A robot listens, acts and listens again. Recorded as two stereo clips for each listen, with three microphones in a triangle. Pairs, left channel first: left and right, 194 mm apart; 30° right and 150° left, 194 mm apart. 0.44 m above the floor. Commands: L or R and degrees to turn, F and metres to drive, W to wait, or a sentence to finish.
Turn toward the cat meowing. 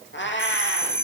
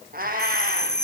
L105
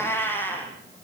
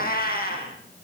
L10
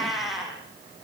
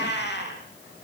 Facing the cat meowing.